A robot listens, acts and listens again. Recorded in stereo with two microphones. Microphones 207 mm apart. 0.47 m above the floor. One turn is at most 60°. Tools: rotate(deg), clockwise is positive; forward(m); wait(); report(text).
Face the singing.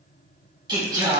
rotate(20)
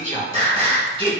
rotate(25)
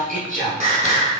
rotate(30)
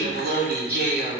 rotate(60)
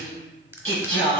rotate(60)
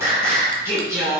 rotate(15)
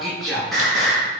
report("Found it: singing, straight ahead, 2 to 4 m away.")